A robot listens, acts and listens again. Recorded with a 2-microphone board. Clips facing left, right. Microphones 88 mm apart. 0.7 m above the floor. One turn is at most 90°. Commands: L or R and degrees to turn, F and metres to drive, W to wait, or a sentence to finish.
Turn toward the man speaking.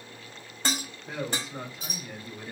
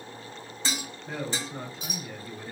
L30
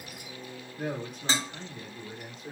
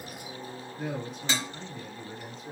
L90
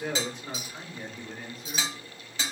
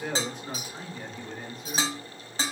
Facing the man speaking.